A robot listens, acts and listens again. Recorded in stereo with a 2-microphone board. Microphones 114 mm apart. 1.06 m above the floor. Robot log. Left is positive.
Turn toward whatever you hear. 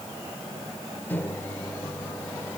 note: The microwave: about 15° left or 165° left.
cmd yaw +15
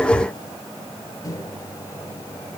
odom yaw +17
note: So it is at 145° left.
cmd yaw +145
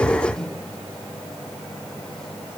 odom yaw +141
end: Found it: a microwave, straight ahead.